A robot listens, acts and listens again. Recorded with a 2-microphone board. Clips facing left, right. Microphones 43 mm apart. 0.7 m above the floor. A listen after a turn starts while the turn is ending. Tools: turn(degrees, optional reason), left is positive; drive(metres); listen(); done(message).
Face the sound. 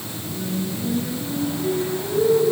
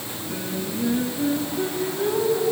turn(degrees=-90)
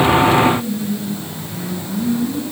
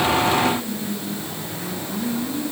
done("Facing the singing, over 4 m away.")